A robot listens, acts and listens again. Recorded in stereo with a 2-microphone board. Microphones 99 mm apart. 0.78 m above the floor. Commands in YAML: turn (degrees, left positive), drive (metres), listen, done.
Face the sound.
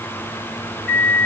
turn: 30
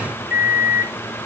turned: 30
turn: -25
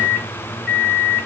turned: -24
done: "Facing the microwave, 1 to 2 m away."